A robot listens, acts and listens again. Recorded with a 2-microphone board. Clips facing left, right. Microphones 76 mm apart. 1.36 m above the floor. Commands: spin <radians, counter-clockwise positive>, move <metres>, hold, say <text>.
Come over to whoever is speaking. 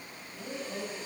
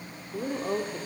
spin -1.22
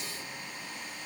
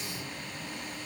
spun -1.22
hold
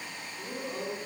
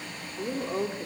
spin -0.70
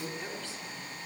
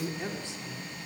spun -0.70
spin -0.35
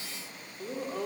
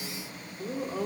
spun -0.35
move 1.0
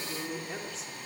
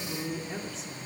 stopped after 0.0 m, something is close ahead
say Something is in my way. I am facing the woman speaking but have not reached it.